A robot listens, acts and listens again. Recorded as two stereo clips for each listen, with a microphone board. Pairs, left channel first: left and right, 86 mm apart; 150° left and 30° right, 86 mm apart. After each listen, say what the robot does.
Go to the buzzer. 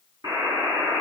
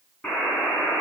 Turn 130° right.
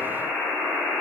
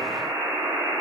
Drive 1.0 m forward.
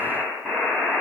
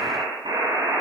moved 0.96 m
Drive 1.0 m forward.
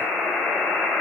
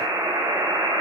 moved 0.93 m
Drive 1.0 m forward.
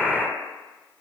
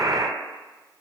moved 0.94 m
Drive 1.0 m forward.
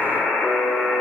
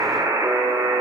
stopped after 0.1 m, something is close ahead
Arrived at the buzzer, straight ahead.